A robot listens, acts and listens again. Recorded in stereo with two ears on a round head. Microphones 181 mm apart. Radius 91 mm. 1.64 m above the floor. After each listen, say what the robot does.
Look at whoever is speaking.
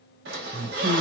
Turn 30° right.
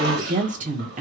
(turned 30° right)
Turn 135° right.
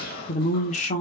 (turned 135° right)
Turn 40° left.
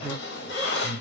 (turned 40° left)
Turn 10° left.
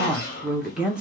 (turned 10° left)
Facing the woman speaking, under 1 m away.